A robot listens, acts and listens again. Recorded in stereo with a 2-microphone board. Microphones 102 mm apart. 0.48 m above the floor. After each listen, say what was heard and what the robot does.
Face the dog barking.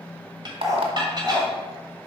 The dog barking: about 40° right or 140° right. Turn 40° right.
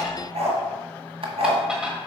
So it is at 95° right. Turn 95° right.
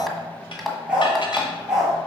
Facing the dog barking.